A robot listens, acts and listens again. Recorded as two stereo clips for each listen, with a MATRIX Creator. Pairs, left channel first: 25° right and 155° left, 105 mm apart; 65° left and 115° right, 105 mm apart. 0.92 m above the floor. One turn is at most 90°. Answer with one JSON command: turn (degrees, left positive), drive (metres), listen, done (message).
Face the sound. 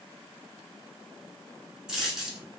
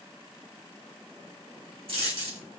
{"turn": -90}
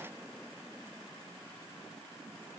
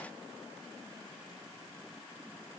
{"turn": -30}
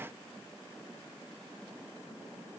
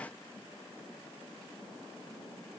{"done": "I heard a dropped coin from this way, but can't make it out now."}